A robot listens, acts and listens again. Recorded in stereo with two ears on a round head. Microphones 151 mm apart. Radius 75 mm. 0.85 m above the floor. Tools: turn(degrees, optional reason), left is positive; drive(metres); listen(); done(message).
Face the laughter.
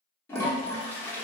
listen()
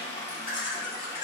turn(degrees=50, reason="The laughter: about 50° left or 130° left.")
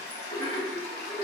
turn(degrees=10, reason="So it is at 10° left.")
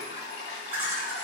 turn(degrees=-15, reason="The laughter is now 15° right.")
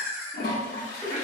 turn(degrees=-25, reason="The laughter is now 25° right.")
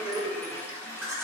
done("Facing the laughter, 1 to 2 m away.")